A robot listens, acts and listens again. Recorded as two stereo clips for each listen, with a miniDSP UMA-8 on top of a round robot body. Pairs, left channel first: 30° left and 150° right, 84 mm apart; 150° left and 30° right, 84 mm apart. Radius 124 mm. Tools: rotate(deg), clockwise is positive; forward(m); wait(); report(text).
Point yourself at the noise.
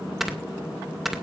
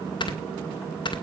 rotate(-120)
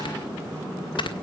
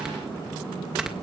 rotate(-50)
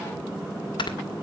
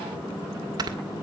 report("Found it: snoring, straight ahead, 2 to 4 m away.")